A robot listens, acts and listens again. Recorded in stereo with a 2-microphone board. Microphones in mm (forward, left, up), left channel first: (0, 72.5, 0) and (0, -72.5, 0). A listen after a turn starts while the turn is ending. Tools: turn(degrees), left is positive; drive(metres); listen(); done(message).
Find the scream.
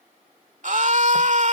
turn(degrees=-60)
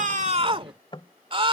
turn(degrees=-45)
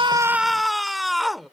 done("Facing the scream.")